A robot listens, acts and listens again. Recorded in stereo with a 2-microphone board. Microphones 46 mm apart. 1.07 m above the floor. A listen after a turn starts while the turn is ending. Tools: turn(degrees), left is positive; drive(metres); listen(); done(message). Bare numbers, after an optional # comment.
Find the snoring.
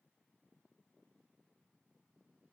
listen()
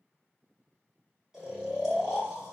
# The snoring: about 15° right or 165° right.
turn(-15)
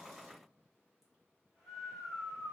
done("Found it: snoring, straight ahead.")